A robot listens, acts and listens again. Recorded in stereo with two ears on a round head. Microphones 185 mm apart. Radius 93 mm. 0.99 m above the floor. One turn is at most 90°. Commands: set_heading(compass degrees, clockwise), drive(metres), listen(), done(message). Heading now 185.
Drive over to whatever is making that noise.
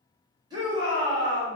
set_heading(205)
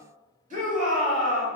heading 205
set_heading(295)
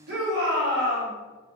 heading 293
set_heading(343)
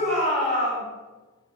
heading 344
drive(1.0)
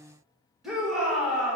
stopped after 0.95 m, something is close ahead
done("Arrived at the shout, straight ahead.")